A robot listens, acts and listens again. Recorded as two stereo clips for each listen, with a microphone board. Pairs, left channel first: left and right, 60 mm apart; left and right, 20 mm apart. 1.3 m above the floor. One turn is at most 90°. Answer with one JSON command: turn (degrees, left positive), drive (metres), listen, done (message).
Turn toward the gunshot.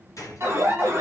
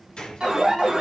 {"turn": 60}
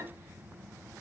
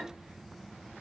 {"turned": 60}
{"listen": true}
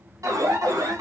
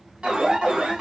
{"done": "I heard a gunshot, but can't make it out now. It was about straight ahead or 60° left."}